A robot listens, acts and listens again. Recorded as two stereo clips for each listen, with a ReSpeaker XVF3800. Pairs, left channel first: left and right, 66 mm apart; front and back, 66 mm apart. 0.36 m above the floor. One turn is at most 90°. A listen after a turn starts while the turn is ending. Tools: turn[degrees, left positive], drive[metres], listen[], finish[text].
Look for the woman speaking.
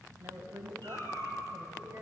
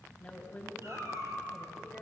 Thought: The woman speaking: 60° right.
Action: turn[-60]
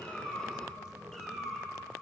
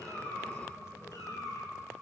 Action: listen[]
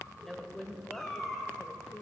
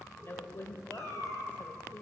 Thought: The woman speaking is now 45° left.
Action: turn[45]
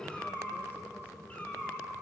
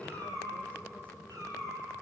Action: listen[]
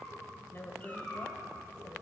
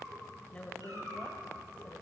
Thought: The woman speaking is now 60° left.
Action: turn[60]
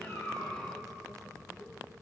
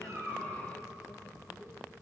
Action: listen[]
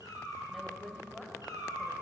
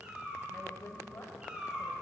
Action: finish[Facing the woman speaking.]